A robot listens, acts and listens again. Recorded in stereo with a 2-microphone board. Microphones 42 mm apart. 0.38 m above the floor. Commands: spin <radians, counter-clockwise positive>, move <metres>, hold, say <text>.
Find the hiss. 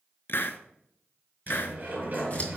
spin 0.96
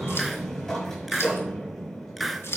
say Facing the hiss.